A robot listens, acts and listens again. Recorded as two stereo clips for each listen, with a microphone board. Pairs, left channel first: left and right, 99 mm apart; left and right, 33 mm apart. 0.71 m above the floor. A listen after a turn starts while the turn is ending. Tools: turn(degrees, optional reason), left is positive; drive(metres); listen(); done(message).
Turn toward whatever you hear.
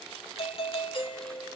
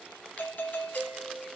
turn(degrees=60, reason="The doorbell: about 60° left or 120° left.")
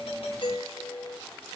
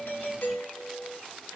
turn(degrees=50, reason="So it is at 50° left.")
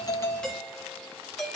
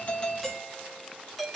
done("Found it: a doorbell, straight ahead.")